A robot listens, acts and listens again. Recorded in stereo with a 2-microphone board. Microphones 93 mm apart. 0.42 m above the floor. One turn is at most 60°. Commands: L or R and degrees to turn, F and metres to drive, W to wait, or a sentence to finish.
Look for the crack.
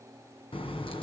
L60
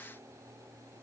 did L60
L30
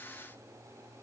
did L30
I heard a crack from this way, but can't make it out now.